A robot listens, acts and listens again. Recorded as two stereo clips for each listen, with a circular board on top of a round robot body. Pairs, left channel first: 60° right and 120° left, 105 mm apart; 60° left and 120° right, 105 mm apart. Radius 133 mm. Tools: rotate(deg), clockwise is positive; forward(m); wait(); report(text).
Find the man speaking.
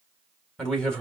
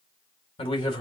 rotate(-20)
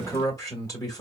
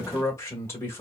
report("Facing the man speaking.")